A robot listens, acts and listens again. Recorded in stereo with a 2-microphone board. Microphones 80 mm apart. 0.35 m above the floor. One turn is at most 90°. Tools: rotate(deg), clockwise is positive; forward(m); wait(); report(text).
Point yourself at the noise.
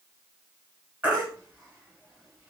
rotate(20)
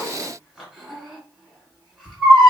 report("Found it: a baby crying, straight ahead.")